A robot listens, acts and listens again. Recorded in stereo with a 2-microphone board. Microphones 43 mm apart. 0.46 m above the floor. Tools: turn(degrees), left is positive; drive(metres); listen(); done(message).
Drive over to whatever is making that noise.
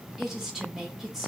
turn(degrees=-30)
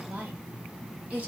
turn(degrees=-145)
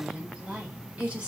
turn(degrees=-35)
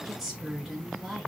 drive(metres=1.0)
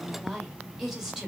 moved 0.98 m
turn(degrees=-10)
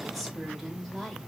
drive(metres=1.0)
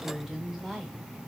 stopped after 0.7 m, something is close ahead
done("Arrived at the woman speaking, straight ahead.")